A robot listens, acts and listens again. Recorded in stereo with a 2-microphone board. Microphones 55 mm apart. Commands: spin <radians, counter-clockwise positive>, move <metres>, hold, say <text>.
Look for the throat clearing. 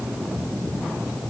hold
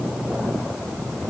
hold
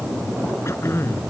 spin 0.87
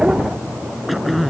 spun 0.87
say Found it: throat clearing, straight ahead.